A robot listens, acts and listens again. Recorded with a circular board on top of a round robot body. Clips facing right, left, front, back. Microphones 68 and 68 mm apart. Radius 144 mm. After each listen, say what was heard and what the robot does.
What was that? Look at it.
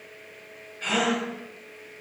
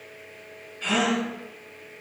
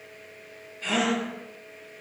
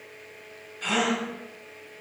The gasp: 175° right. Turn 175° right.
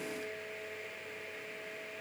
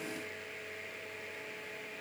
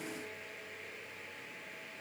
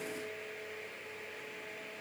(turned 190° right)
Nothing new. It was at 15° left. Turn 15° left.
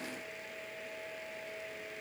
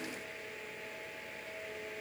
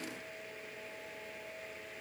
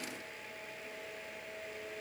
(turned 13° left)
Facing where the gasp came from. I can't hear it now.